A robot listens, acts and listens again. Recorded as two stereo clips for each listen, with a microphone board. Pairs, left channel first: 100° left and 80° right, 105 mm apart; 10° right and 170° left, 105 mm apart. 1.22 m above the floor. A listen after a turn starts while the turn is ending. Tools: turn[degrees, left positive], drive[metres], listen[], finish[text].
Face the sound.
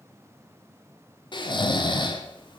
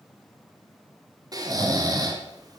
Thought: The snoring: 130° left.
Action: turn[130]
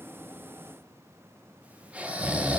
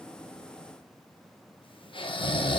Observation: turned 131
Action: finish[Found it: snoring, straight ahead.]